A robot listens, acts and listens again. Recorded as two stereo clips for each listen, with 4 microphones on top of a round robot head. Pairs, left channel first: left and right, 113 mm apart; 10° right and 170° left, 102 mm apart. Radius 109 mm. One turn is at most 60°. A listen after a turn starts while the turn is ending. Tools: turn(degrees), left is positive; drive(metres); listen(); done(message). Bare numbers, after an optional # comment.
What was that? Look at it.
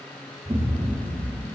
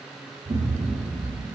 # The explosion: 150° right.
turn(-60)
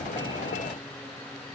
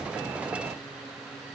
# Nothing new. It was at 90° right.
turn(-60)
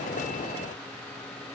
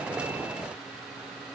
# Nothing new. It was at 30° right.
turn(-30)
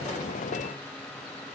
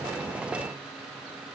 done("Facing where the explosion came from. I can't hear it now.")